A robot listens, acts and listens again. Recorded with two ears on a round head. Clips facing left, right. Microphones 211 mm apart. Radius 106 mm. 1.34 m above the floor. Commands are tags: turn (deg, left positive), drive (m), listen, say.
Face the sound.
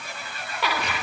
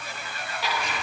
<turn deg="50"/>
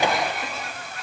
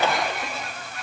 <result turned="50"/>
<listen/>
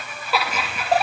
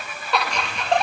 <say>Facing the laughter.</say>